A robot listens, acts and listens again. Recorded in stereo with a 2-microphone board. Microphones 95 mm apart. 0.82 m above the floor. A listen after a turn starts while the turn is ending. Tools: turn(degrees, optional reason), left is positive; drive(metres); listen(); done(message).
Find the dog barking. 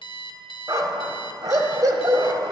turn(degrees=-40, reason="The dog barking: about 40° right or 140° right.")
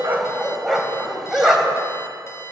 done("Found it: a dog barking, straight ahead.")